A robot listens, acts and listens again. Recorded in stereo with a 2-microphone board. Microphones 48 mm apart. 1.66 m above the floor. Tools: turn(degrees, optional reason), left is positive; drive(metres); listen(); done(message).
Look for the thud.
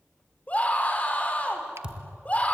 turn(degrees=-20, reason="The thud: about 20° right or 160° right.")
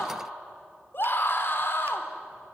listen()
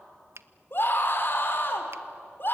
done("I heard a thud, but can't make it out now. It was about straight ahead or 140° right.")